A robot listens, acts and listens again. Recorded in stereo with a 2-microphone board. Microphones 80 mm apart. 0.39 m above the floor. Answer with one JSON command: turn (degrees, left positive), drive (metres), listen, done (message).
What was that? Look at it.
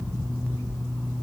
{"listen": true}
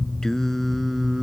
{"turn": -30}
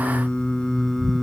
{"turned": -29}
{"turn": 30}
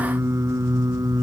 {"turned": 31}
{"turn": -55}
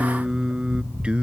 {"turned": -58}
{"turn": -15}
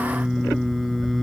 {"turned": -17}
{"done": "Found it: singing, straight ahead."}